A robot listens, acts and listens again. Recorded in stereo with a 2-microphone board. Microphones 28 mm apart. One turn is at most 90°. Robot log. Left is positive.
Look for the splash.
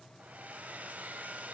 cmd idle
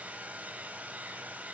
cmd idle
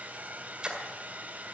note: The splash: about 35° right or 145° right.
cmd yaw -35
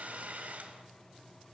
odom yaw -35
cmd idle
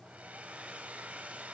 end: I heard a splash, but can't make it out now. It was about straight ahead or 110° right.